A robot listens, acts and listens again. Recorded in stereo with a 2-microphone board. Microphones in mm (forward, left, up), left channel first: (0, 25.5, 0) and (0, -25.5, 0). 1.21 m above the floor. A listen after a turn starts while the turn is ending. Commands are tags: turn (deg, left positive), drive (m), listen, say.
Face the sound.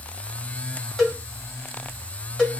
<turn deg="30"/>
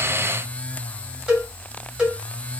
<turn deg="-15"/>
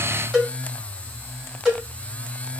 <say>Facing the cowbell, 1 to 2 m away.</say>